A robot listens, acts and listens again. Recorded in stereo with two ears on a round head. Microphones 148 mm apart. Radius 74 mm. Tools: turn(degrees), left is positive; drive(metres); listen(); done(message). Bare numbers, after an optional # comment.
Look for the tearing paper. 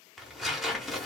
turn(30)
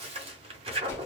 # So it is at 35° right.
turn(-35)
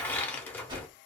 # The tearing paper is now 10° left.
turn(10)
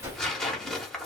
done("Facing the tearing paper.")